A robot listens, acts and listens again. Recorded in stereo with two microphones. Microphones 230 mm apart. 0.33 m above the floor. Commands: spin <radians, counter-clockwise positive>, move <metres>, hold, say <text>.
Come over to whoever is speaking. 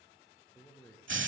spin 0.52
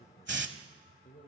spin 2.44
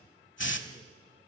hold
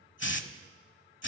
hold
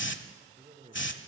spin -0.61
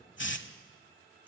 hold
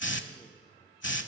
hold
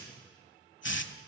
say I heard a man speaking from this way, but can't make it out now. I did not reach it.